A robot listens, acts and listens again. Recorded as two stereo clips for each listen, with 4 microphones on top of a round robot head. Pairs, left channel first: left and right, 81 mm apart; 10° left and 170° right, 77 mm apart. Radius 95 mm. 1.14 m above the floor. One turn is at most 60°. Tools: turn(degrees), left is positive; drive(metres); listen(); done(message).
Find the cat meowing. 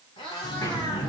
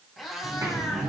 turn(degrees=60)
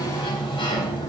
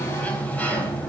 turn(degrees=40)
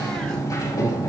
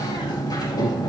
listen()
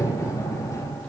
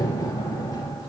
done("I heard a cat meowing from this way, but can't make it out now.")